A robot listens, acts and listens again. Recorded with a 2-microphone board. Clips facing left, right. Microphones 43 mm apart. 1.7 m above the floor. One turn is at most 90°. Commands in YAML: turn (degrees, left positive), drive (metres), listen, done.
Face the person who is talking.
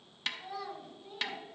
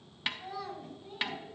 turn: 30
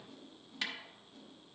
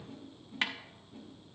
listen: true
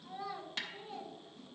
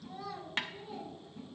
turn: 90
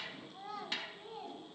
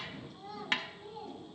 turn: 75
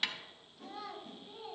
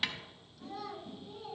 turn: 20
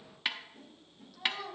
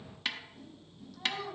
done: "Facing the child speaking."